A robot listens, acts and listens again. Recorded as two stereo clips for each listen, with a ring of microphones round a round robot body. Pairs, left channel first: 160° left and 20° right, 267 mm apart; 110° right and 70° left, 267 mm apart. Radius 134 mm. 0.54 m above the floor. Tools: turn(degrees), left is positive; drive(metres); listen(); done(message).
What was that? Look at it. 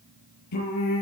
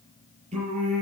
turn(degrees=135)
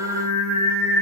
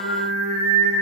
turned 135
turn(degrees=45)
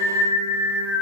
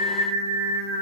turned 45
turn(degrees=-10)
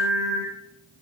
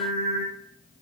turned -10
turn(degrees=-10)
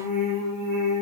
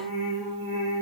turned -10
done("Facing the singing.")